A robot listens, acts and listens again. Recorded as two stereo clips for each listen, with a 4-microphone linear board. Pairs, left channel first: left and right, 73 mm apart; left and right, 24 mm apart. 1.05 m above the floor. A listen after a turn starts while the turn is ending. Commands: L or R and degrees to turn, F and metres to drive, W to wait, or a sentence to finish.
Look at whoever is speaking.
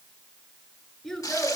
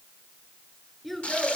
L30
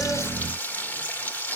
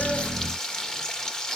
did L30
W
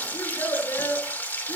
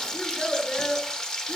L135
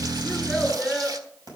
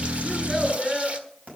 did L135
Found it: a child speaking, straight ahead.